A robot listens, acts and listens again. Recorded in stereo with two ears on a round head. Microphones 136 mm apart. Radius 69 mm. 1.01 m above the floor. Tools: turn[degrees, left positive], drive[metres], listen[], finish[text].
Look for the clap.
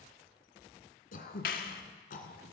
Thought: The clap: about 60° left or 120° left.
Action: turn[60]
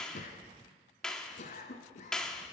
Action: finish[Facing the clap, 1 to 2 m away.]